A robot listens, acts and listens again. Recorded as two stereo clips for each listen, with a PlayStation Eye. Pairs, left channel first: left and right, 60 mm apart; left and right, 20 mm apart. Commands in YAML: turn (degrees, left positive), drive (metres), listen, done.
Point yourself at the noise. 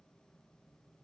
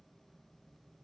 listen: true
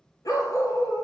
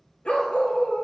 turn: 90
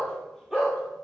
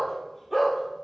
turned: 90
turn: -10
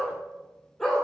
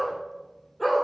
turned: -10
done: "Found it: a dog barking, straight ahead, 2 to 4 m away."